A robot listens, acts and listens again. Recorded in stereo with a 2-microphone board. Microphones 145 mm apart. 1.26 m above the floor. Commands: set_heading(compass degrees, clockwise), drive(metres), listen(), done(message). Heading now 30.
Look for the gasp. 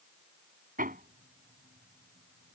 listen()
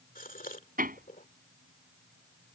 set_heading(325)
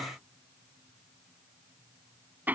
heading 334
listen()
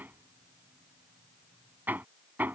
done("I heard a gasp, but can't make it out now. It was about 5° left or 60° left.")